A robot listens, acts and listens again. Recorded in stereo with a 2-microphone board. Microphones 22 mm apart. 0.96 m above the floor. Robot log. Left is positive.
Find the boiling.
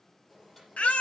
note: The boiling: about 20° left or 160° left.
cmd yaw +20
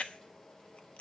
note: So it is at 145° left.
cmd yaw +145
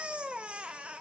cmd idle
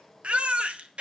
note: The boiling is now 15° left.
cmd yaw +15
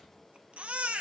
end: Facing the boiling.